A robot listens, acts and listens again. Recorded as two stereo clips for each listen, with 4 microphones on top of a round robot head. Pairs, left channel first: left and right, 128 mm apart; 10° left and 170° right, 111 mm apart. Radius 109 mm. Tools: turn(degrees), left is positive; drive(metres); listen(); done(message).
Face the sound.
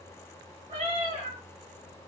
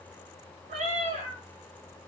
turn(degrees=-145)
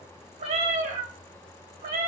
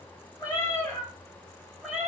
turn(degrees=-85)
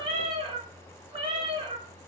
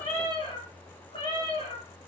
turn(degrees=-50)
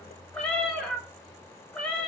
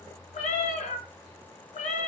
done("Facing the cat meowing.")